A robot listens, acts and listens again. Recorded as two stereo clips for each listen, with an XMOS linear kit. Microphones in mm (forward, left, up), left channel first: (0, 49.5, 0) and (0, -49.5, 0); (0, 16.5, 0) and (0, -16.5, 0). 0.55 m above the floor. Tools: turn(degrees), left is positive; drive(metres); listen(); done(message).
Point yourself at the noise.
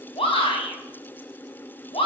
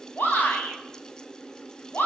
turn(degrees=70)
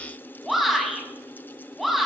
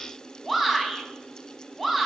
done("Facing the shout, over 4 m away.")